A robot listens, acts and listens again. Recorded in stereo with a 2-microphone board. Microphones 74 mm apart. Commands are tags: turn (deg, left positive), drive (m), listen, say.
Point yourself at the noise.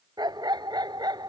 <turn deg="-90"/>
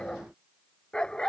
<turn deg="10"/>
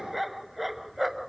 <say>Facing the dog barking.</say>